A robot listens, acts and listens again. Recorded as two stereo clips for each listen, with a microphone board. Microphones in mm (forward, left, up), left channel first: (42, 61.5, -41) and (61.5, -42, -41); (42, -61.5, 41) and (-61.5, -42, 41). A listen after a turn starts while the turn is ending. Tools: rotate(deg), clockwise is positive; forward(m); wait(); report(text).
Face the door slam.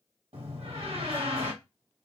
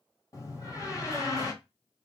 rotate(65)
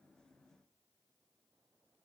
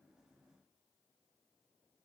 report("Facing where the door slam came from. I can't hear it now.")